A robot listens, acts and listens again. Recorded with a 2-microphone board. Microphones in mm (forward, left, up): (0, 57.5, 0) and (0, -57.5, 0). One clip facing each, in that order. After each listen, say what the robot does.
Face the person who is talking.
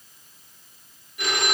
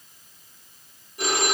Keep listening.
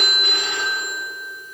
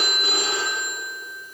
Keep listening.
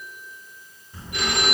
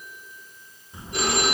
Turn 20° right.
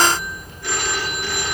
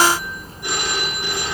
Turn 35° right.
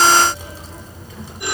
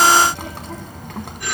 Turn 115° right.
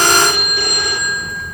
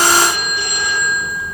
Turn 10° right.
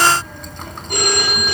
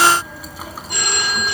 Facing the child speaking.